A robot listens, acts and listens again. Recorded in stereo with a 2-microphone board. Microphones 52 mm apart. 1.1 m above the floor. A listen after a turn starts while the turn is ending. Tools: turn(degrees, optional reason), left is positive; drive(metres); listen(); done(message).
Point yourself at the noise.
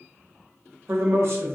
turn(degrees=-55, reason="The man speaking: about 55° right or 125° right.")
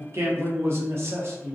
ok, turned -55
turn(degrees=-65, reason="So it is at 65° right.")
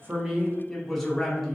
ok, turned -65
done("Found it: a man speaking, straight ahead.")